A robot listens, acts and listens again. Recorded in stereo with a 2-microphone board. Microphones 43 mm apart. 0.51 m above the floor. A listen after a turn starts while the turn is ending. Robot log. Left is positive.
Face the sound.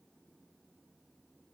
cmd idle
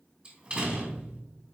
note: The door slam: about 25° right or 155° right.
cmd yaw -25
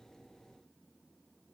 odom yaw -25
cmd idle
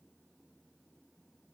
end: I heard a door slam, but can't make it out now. It was about straight ahead or 130° right.